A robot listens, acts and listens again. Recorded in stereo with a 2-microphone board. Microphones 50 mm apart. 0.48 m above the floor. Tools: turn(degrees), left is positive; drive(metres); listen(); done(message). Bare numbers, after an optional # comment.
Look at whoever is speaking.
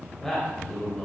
turn(30)
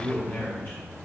# So it is at 135° left.
turn(135)
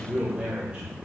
# The man speaking is now 20° right.
turn(-20)
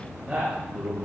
# The man speaking is now 20° right.
turn(-20)
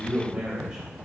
done("Found it: a man speaking, straight ahead, 2 to 4 m away.")